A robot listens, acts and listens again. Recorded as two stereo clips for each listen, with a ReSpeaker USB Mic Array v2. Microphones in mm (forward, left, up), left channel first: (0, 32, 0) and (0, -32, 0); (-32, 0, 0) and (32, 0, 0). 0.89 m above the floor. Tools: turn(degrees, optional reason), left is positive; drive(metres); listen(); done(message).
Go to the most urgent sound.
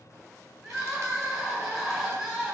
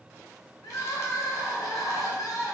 turn(degrees=180, reason="The crying: straight behind.")
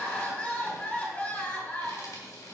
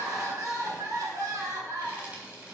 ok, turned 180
turn(degrees=25, reason="The crying is now 25° left.")
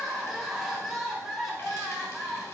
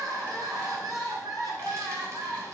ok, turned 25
drive(metres=1.0)
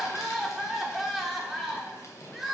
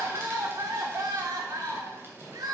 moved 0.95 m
drive(metres=1.0)
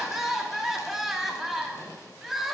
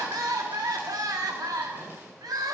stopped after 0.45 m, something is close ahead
done("I am next to the crying.")